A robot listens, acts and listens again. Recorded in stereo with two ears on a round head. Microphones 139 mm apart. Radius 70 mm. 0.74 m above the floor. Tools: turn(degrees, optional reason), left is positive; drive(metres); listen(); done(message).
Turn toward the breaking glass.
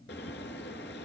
listen()
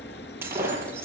turn(degrees=-30)
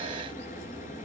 listen()
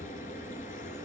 done("I heard breaking glass, but can't make it out now. It was about 15° left or 135° right.")